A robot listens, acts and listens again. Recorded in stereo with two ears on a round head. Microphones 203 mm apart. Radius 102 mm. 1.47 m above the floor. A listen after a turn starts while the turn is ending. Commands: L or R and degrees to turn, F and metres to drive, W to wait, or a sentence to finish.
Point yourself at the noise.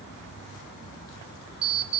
R25
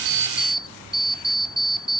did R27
Facing the alarm clock.